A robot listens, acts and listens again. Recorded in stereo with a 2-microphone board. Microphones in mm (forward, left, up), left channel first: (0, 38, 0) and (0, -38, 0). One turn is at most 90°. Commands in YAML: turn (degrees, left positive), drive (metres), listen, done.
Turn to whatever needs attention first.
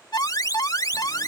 turn: 60
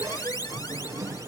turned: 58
turn: 65
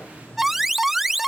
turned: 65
done: "Facing the alarm."